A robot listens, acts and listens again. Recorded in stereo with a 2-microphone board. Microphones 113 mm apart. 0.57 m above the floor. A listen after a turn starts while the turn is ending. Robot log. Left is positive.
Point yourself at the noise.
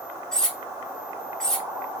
cmd yaw +30
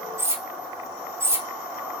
note: So it is at 25° right.
cmd yaw -25
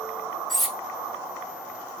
end: Found it: cutlery clinking, straight ahead, under 1 m away.